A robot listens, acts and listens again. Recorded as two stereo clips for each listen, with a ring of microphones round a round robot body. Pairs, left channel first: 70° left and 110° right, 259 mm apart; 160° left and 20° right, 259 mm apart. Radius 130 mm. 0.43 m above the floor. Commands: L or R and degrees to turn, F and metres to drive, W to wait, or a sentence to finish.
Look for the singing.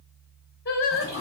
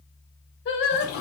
L115
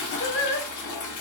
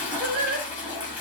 L30
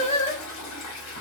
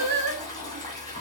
Facing the singing.